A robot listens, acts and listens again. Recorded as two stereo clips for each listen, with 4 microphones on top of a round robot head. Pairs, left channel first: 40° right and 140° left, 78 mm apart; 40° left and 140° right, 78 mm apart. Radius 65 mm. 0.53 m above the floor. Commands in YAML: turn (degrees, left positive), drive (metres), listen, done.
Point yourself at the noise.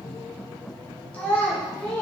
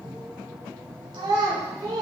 turn: -105
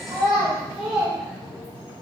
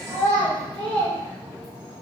turn: 60
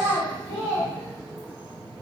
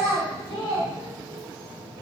turn: 25
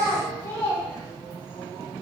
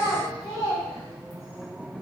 turn: 10
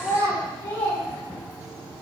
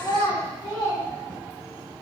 done: "Facing the child speaking, 2 to 4 m away."